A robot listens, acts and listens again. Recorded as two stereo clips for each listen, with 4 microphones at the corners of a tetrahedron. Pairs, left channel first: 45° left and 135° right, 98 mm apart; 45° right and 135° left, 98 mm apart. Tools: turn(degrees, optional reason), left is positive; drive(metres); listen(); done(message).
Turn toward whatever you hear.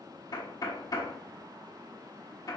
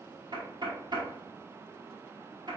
turn(degrees=95, reason="The knocking: 95° left.")
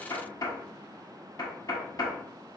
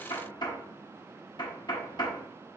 done("Found it: knocking, straight ahead.")